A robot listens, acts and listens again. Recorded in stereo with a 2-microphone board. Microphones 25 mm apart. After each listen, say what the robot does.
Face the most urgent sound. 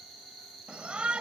Turn 60° right.
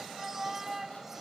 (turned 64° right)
Turn 20° right.
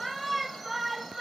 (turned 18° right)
Found it: a shout, straight ahead.